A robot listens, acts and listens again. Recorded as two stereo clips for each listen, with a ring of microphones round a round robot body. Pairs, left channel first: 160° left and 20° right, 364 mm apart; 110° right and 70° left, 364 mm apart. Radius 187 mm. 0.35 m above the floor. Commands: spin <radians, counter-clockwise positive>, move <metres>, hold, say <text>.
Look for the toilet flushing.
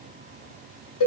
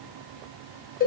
hold
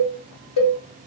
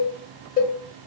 hold
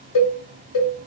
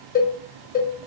say I can't make out a toilet flushing, only a cowbell.